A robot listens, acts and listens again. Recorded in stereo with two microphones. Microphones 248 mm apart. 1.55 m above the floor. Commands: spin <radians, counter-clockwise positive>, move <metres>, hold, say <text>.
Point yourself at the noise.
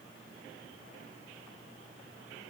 hold
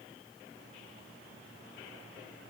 hold
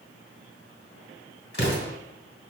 spin 0.79
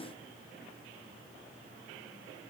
hold
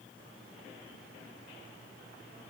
say I heard an explosion, but can't make it out now. It was about straight ahead or 90° left.